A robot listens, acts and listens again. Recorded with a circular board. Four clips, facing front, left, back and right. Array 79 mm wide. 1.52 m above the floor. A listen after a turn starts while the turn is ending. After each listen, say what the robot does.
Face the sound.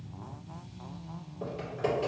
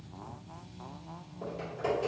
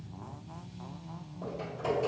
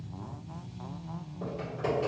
Turn 20° right.
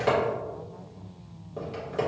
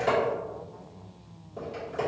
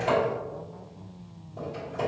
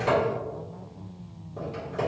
Turn 10° right.
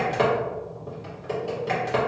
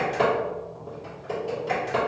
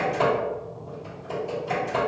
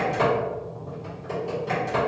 Found it: typing on a keyboard, straight ahead, 1 to 2 m away.